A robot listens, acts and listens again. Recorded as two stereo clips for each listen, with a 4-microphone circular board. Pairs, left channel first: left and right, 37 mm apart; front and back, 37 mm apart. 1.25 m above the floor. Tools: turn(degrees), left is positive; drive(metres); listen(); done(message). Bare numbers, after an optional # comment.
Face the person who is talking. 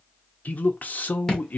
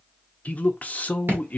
# The man speaking: 50° left.
turn(50)
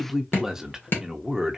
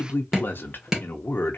# The man speaking is now 10° right.
turn(-10)
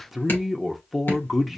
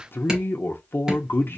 done("Facing the man speaking.")